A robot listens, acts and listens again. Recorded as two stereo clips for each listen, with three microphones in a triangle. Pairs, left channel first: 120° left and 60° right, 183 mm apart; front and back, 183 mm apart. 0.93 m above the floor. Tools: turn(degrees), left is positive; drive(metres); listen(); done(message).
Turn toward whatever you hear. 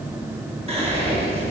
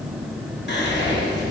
done("Facing the whispering.")